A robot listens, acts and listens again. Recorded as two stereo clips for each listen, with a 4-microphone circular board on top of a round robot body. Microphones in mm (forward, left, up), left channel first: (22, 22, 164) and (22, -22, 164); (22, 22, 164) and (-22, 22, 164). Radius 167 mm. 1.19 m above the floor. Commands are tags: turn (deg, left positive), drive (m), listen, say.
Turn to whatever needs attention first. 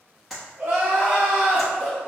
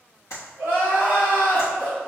<turn deg="-130"/>
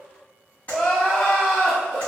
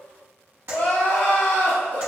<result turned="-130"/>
<turn deg="10"/>
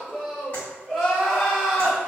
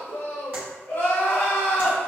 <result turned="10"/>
<say>Found it: crying, straight ahead.</say>